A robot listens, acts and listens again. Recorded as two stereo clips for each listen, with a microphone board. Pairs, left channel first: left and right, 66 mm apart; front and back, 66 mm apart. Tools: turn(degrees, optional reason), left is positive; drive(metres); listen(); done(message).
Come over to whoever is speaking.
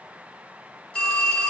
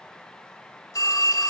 listen()
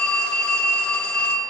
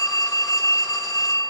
listen()
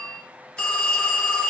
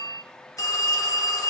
done("I can't make out anyone speaking, only a phone ringing.")